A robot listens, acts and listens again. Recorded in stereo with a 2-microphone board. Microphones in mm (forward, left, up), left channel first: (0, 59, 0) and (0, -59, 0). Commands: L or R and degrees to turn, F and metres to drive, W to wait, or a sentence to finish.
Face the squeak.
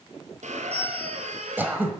R90
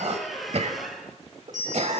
Facing the squeak, 1 to 2 m away.